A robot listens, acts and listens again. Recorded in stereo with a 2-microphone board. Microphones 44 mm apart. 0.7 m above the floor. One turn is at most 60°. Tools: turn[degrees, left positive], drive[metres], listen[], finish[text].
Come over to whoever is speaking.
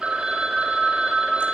Action: listen[]
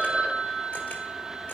Action: listen[]
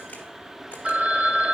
Action: finish[I can't make out anyone speaking to turn to.]